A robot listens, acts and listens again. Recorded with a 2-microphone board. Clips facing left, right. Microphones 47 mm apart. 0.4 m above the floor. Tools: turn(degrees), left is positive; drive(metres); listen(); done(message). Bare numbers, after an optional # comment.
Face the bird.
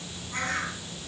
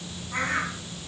turn(-30)
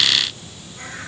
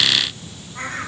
# So it is at 135° right.
turn(-135)
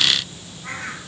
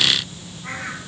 done("Found it: a bird, straight ahead.")